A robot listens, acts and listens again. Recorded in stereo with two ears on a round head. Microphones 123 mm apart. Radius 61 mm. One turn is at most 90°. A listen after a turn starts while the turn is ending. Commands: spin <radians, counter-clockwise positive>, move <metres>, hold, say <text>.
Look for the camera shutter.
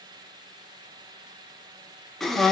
hold
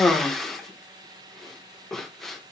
hold
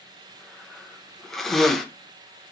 say I can't make out a camera shutter, only a cough.